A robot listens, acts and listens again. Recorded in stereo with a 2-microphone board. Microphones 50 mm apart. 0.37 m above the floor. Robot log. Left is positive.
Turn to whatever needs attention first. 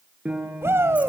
note: The shout: about 55° right or 125° right.
cmd yaw -55
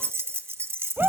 note: So it is at 50° right.
cmd yaw -50
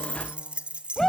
note: The shout is now 10° left.
cmd yaw +10
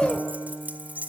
end: Found it: a shout, straight ahead.